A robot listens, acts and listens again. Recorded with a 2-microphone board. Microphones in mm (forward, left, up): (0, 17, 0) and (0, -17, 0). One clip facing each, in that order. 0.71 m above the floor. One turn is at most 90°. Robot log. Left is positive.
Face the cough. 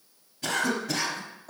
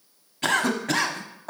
note: The cough: about 65° right or 115° right.
cmd yaw -65
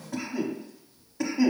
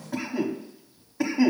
note: So it is at 20° right.
cmd yaw -20
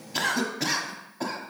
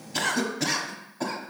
end: Facing the cough.